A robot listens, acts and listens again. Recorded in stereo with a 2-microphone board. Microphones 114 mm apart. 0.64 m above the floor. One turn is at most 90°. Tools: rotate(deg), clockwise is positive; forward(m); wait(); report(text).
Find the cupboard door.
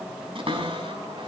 rotate(55)
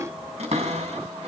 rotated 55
rotate(70)
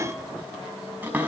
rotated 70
rotate(15)
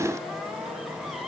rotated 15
wait()
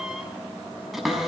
report("Facing the cupboard door, over 4 m away.")